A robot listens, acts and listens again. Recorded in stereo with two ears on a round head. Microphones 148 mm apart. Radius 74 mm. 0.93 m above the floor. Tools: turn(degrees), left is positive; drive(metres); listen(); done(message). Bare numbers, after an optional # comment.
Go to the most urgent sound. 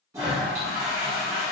listen()
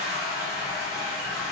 listen()
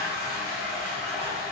done("I can't make out anything urgent, only a toilet flushing.")